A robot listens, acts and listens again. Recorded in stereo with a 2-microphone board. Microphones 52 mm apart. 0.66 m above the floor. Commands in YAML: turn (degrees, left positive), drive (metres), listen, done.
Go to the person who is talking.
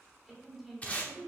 turn: -30
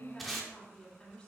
turn: 20
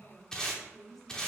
drive: 1.0
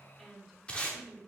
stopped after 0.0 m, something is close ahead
done: "Something is in my way. I am facing the woman speaking but have not reached it."